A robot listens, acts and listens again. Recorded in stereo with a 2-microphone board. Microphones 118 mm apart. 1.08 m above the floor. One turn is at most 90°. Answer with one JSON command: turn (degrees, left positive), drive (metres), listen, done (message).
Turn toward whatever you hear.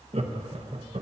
{"turn": -60}
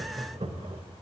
{"turn": -60}
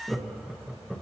{"done": "Facing the laughter."}